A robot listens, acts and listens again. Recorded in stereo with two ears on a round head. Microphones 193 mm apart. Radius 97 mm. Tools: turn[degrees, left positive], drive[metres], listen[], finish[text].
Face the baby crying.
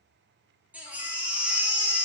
Action: turn[-30]
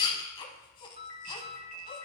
Thought: So it is at 25° left.
Action: turn[25]
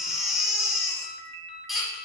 Action: finish[Found it: a baby crying, straight ahead, under 1 m away.]